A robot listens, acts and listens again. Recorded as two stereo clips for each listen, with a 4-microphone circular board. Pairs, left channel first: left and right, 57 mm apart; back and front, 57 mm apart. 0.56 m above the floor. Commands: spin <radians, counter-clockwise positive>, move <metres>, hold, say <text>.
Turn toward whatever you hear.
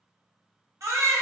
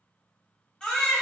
spin -1.83
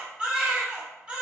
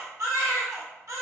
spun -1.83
spin -0.35
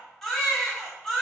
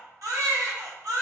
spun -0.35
say Found it: a baby crying, straight ahead, under 1 m away.